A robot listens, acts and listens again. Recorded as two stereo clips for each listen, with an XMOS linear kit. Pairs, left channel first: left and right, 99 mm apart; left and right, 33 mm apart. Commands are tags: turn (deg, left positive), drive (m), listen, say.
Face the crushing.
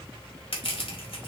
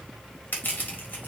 <turn deg="70"/>
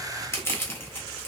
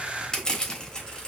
<turn deg="30"/>
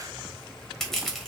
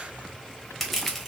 <say>Facing the crushing.</say>